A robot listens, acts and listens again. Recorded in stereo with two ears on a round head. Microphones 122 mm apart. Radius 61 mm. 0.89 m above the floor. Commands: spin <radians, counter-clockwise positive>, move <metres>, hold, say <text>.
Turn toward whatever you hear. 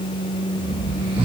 spin -0.70
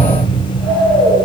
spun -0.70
say Facing the snoring, 2 to 4 m away.